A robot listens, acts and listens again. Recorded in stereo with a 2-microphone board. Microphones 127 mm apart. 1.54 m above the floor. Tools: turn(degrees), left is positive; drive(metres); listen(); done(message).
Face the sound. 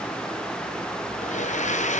turn(degrees=70)
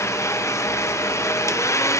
turn(degrees=25)
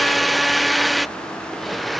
done("Facing the blender.")